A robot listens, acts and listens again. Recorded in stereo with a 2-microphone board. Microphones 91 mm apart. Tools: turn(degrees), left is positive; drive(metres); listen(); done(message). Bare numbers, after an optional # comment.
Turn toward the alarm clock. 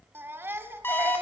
# The alarm clock: about 25° left or 155° left.
turn(25)
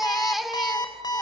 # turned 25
# So it is at 130° left.
turn(130)
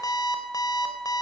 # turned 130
# The alarm clock is now 45° left.
turn(45)
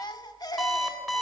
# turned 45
done("Found it: an alarm clock, straight ahead, 2 to 4 m away.")